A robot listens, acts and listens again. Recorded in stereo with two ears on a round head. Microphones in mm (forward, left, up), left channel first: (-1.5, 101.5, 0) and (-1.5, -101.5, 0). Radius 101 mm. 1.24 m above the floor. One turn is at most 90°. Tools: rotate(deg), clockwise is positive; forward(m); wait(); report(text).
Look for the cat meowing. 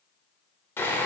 wait()
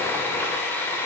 wait()
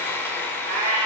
rotate(55)
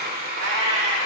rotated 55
rotate(75)
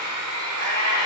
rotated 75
rotate(55)
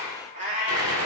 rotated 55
rotate(40)
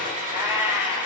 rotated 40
rotate(10)
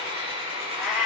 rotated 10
report("Facing the cat meowing, 2 to 4 m away.")